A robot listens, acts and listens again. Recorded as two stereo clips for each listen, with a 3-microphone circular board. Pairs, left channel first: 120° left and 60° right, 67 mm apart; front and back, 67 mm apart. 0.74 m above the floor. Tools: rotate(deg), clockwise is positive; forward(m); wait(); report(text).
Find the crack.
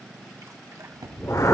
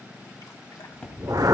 rotate(75)
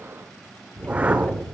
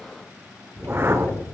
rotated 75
report("Facing where the crack came from. I can't hear it now.")